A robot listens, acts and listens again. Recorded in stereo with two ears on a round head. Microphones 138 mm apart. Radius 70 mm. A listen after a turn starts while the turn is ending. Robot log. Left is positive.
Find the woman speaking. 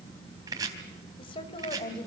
note: The woman speaking: about 35° left or 145° left.
cmd yaw +35
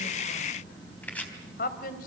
note: So it is at 105° left.
cmd yaw +105
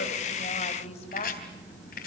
note: The woman speaking is now 45° left.
cmd yaw +45
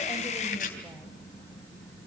cmd idle
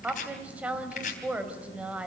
note: The woman speaking is now 10° right.
cmd yaw -10
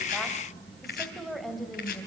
end: Found it: a woman speaking, straight ahead.